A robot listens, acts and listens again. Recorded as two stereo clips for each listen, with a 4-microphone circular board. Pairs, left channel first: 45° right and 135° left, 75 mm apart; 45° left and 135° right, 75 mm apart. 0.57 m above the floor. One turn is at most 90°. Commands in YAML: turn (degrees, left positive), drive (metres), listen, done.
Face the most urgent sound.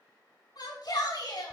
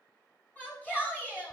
turn: -25
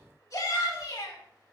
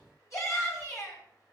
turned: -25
done: "Found it: a shout, straight ahead."